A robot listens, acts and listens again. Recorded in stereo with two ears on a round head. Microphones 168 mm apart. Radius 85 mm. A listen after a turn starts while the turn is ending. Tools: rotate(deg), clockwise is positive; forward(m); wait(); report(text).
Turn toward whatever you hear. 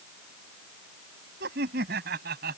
rotate(55)
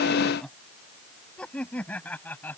rotate(-10)
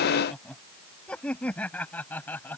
rotate(-10)
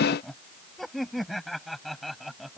report("Found it: laughter, straight ahead.")